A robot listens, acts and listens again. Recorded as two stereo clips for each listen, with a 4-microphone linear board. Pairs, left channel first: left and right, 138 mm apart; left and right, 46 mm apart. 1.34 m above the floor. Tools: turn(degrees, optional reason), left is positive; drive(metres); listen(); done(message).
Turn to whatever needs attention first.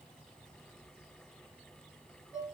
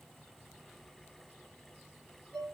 listen()
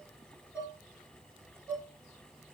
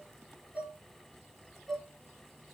listen()
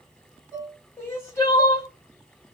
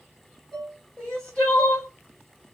turn(degrees=20, reason="The crying: about 20° left or 160° left.")
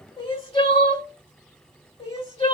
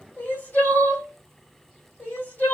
turn(degrees=140, reason="So it is at 140° left.")
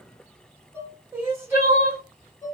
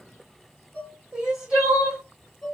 turn(degrees=-15, reason="The crying is now 15° right.")
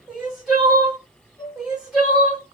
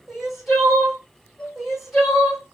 done("Found it: crying, straight ahead, 2 to 4 m away.")